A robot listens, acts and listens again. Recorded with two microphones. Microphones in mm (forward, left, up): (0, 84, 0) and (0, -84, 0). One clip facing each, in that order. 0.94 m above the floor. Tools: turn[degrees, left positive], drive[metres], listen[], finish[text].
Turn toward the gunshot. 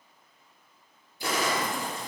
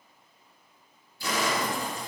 Thought: The gunshot: about 55° left or 125° left.
Action: turn[55]
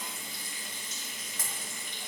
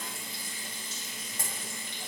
Action: listen[]
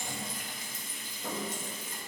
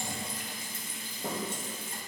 Action: finish[I heard a gunshot, but can't make it out now. It was about straight ahead or 70° left.]